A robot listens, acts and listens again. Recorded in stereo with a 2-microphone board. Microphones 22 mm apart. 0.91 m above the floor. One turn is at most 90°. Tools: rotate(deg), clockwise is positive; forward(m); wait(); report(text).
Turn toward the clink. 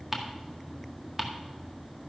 wait()
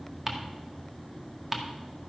wait()
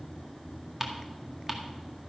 report("I can't make out a clink, only ticking.")